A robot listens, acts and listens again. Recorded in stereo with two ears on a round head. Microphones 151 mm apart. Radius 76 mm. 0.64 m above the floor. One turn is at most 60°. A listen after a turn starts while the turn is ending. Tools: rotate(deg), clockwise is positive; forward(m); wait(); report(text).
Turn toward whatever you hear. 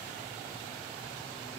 wait()
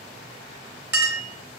rotate(30)
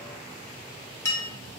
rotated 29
rotate(-15)
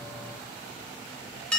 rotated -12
report("Found it: a clink, straight ahead.")